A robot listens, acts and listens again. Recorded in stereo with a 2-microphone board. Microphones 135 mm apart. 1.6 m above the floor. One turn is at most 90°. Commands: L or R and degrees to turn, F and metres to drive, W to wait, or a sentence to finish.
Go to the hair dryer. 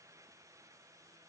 W
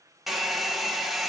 L30
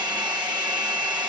R30
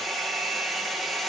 F1.0
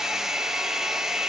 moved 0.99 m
F1.0
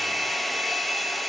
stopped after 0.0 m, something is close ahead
Arrived at the hair dryer, straight ahead.